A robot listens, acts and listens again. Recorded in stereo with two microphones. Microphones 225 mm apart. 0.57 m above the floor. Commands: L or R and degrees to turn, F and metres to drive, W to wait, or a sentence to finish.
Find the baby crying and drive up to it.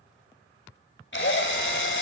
W
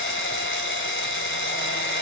W
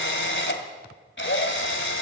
I can't make out a baby crying to turn to.